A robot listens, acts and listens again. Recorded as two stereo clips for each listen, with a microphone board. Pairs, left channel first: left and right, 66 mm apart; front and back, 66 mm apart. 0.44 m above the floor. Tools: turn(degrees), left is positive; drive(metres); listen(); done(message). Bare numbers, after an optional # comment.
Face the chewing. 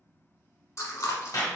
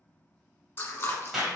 # The chewing: 55° left.
turn(55)
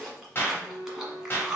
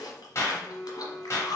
done("Facing the chewing, 1 to 2 m away.")